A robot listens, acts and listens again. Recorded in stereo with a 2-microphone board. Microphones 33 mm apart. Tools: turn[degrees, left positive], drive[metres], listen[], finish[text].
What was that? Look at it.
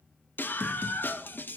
Action: turn[90]
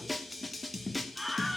Action: finish[Facing the scream, 1 to 2 m away.]